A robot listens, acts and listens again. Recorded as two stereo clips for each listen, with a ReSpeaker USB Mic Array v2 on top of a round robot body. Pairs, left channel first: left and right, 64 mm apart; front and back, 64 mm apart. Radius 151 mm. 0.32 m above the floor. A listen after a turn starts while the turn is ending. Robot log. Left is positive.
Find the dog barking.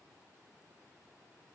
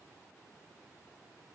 cmd idle
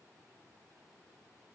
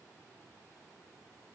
cmd idle
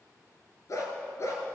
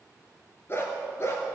note: The dog barking: 50° left.
cmd yaw +50
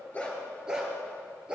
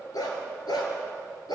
note: The dog barking is now 15° right.
cmd yaw -15
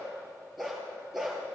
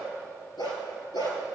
end: Found it: a dog barking, straight ahead.